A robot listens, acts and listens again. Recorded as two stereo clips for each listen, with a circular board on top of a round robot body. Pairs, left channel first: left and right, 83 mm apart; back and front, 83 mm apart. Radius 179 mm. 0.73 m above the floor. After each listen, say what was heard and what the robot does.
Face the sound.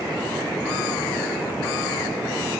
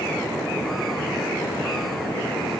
Keep listening.
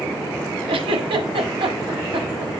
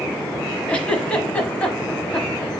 The giggle: 105° right. Turn 105° right.
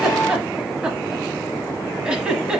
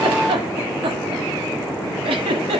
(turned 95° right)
The giggle is now 10° right. Turn 10° right.
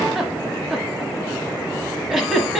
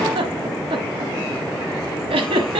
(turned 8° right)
Found it: a giggle, straight ahead.